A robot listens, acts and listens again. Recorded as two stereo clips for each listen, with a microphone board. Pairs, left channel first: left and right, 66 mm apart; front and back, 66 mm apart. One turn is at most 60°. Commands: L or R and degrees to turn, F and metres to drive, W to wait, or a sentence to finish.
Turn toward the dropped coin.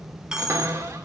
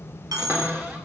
R60
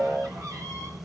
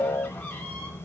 R60
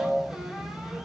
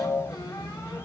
R50
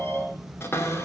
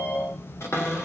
I heard a dropped coin from this way, but can't make it out now.